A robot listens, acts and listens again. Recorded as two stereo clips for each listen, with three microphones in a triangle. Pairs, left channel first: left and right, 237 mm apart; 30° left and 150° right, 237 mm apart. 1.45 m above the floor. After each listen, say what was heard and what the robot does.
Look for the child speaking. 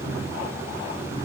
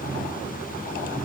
Keep listening.
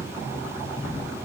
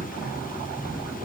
Keep listening.
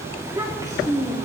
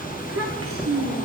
The child speaking: 170° right. Turn 170° right.
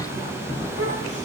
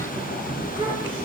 Keep listening.
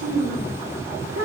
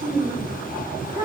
The child speaking is now 85° right. Turn 85° right.
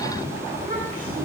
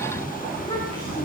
Keep listening.
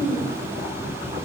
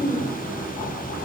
The child speaking is now 40° right. Turn 40° right.
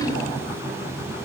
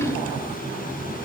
Keep listening.
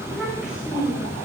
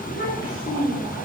Facing the child speaking.